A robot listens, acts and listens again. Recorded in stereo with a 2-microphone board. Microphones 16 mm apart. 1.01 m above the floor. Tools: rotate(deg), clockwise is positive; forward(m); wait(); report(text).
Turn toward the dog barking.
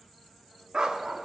rotate(60)
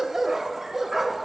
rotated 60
rotate(30)
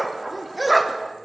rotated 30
report("Facing the dog barking.")